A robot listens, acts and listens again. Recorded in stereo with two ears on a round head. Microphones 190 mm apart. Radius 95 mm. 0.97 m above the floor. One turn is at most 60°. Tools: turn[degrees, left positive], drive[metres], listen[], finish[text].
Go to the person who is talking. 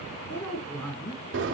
Action: turn[30]
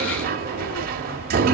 Action: listen[]
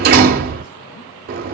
Action: listen[]
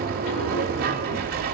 Action: finish[I heard a woman speaking, but can't make it out now. It was about 15° right or 135° left. I did not reach it.]